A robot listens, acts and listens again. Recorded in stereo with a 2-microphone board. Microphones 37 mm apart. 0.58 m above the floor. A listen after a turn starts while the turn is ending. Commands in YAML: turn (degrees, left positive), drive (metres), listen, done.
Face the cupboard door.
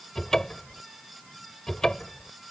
turn: 15
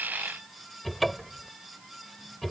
done: "Facing the cupboard door."